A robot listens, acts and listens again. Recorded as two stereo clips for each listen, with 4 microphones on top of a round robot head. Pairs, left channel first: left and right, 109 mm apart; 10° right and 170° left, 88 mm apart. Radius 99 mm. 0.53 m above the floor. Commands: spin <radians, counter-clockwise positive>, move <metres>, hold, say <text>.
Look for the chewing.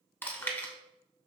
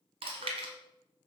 spin 2.79
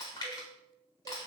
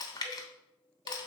spin 0.44
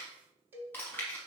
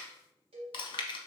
spin 0.26
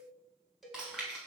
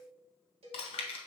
say Facing the chewing.